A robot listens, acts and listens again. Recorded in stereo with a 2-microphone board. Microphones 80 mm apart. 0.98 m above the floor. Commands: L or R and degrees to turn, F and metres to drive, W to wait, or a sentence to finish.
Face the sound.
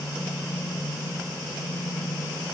W
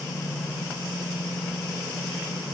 W
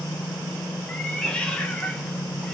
L30
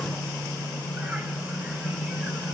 W
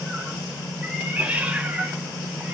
R20
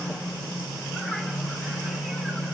W
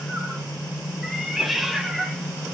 Found it: a cat meowing, straight ahead.